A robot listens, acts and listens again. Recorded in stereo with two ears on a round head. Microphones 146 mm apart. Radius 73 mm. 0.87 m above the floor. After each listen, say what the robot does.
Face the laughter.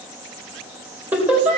Turn 30° right.
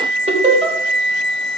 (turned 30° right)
Turn 135° right.
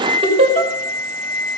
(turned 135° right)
Turn 40° right.
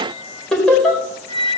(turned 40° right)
Facing the laughter, over 4 m away.